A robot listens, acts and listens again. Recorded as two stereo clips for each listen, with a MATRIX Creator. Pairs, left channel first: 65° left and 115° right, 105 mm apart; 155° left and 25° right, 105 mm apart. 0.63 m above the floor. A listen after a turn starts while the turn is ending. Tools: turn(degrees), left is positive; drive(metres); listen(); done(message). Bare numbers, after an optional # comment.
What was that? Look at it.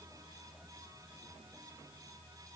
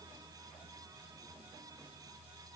listen()
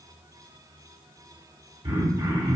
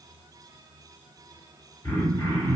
# The throat clearing: 155° right.
turn(-155)
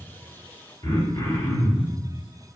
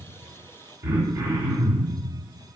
# The throat clearing is now 30° left.
turn(30)
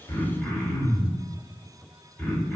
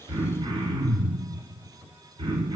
# The throat clearing is now 10° right.
turn(-10)
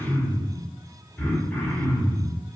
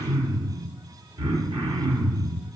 done("Facing the throat clearing, 1 to 2 m away.")